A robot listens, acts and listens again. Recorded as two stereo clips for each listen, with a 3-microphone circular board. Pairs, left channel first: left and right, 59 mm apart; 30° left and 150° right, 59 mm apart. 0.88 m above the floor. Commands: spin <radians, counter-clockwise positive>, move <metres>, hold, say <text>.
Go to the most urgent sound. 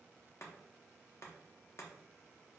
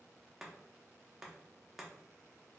hold
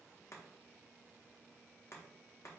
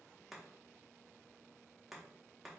hold
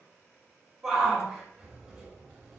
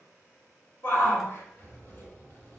spin -0.17
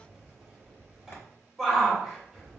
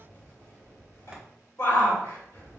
move 1.0
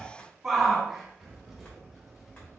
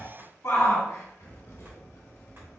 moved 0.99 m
move 1.0
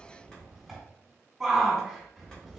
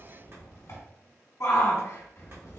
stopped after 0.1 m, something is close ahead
say I am next to the shout.